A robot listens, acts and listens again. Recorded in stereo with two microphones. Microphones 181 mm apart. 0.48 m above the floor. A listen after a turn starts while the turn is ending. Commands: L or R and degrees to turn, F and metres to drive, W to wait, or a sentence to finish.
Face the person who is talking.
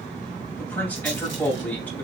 L30
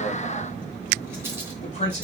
L140
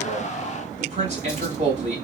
R40
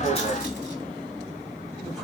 W
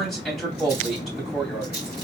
Found it: a man speaking, straight ahead, 2 to 4 m away.